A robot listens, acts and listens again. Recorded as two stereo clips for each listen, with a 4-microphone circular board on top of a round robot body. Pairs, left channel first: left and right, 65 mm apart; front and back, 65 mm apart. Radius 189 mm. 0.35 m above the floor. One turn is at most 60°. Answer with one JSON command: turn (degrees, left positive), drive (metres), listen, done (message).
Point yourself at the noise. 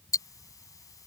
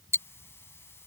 {"turn": 55}
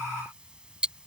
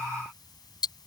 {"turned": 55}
{"turn": -10}
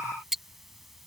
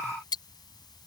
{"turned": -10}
{"done": "Facing the ticking."}